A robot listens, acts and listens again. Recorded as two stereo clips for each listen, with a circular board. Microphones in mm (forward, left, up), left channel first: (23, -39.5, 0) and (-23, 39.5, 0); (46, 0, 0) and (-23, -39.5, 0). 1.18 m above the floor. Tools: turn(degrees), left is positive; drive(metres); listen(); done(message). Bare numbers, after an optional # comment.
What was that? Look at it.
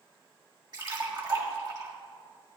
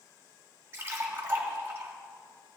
# The splash: 150° left.
turn(150)
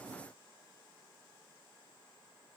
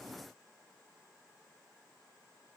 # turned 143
# Nothing new. It was at 10° left.
turn(10)
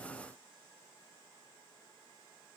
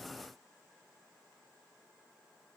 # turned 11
done("I heard a splash from this way, but can't make it out now.")